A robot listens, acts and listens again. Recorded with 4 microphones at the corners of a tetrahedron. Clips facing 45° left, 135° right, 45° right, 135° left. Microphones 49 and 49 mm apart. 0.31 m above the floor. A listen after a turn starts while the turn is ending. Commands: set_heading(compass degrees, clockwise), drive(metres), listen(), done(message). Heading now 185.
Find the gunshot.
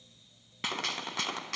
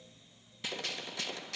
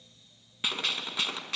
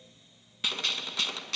set_heading(155)
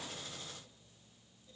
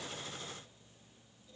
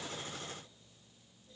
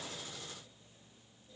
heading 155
done("I heard a gunshot from this way, but can't make it out now.")